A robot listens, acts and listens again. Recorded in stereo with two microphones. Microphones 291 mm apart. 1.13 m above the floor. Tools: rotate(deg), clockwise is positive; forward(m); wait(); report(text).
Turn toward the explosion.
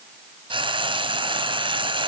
wait()
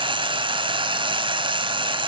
wait()
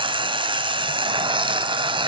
report("I can't make out an explosion, only frying.")